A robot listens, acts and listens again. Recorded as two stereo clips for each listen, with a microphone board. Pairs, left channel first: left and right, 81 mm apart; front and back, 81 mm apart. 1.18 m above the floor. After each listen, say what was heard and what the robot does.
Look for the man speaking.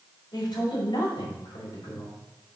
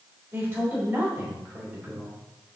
The man speaking: 105° left. Turn 105° left.
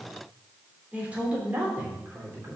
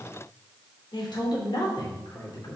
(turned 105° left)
The man speaking is now 30° right. Turn 30° right.
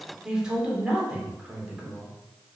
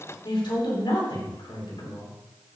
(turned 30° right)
The man speaking is now 10° right. Turn 10° right.
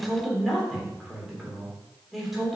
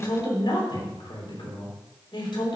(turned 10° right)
Found it: a man speaking, straight ahead.